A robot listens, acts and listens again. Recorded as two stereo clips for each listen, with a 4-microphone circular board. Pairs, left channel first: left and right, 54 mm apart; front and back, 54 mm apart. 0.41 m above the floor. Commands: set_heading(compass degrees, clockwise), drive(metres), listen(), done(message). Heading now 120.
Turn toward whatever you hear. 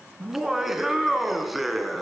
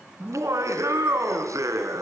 set_heading(300)
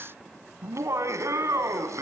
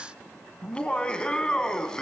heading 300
set_heading(20)
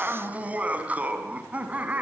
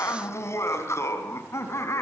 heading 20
set_heading(50)
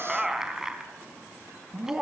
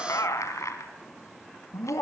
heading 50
set_heading(60)
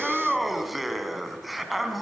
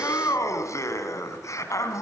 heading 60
done("Found it: laughter, straight ahead, over 4 m away.")